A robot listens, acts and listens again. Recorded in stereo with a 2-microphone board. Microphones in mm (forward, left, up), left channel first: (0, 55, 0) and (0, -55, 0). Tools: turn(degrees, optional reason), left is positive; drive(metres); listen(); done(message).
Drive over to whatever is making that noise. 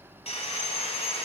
turn(degrees=65, reason="The sawing: about 65° left or 115° left.")
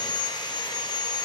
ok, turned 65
turn(degrees=40, reason="So it is at 40° left.")
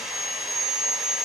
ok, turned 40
drive(metres=1.0)
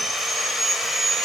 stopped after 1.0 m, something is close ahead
done("I am next to the sawing.")